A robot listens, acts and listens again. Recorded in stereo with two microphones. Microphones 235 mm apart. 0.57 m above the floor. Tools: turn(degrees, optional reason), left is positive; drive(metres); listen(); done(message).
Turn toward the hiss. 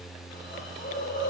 turn(degrees=50, reason="The hiss: about 50° left or 130° left.")
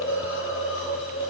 turn(degrees=70, reason="So it is at 70° left.")
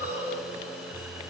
turn(degrees=-10, reason="The hiss is now 10° right.")
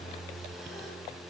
listen()
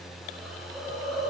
done("Found it: a hiss, straight ahead.")